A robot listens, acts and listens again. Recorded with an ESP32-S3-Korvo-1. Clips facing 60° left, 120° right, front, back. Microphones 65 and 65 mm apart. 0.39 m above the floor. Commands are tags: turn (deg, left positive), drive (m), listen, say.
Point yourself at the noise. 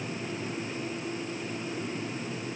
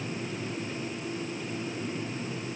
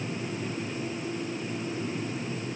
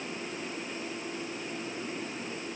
<listen/>
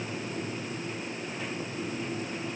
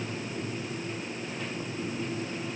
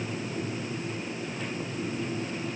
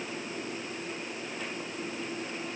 <listen/>
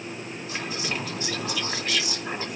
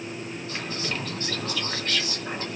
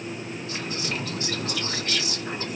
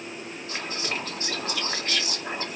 <turn deg="135"/>
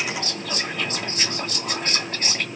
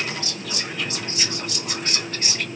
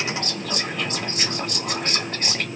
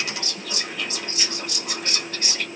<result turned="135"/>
<turn deg="30"/>
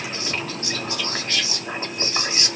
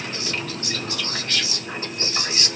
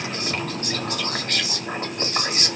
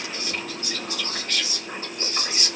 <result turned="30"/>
<say>Facing the whispering, 1 to 2 m away.</say>